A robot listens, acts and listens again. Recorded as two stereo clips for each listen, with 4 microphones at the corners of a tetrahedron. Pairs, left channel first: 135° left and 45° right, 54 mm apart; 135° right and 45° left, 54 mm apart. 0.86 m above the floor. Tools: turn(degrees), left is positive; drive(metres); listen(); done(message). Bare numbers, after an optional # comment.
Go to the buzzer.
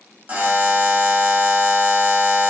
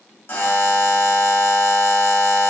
# The buzzer: 100° right.
turn(-100)
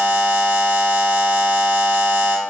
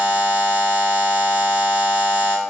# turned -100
drive(1.0)
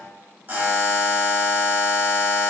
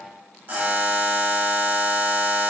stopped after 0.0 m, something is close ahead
done("Blocked. The buzzer is further on, straight ahead.")